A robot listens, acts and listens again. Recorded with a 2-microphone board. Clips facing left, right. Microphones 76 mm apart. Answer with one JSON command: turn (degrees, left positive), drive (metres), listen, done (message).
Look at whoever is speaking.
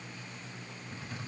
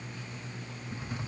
{"listen": true}
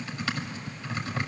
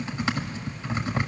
{"listen": true}
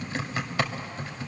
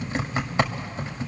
{"done": "I can't make out anyone speaking, only typing on a keyboard."}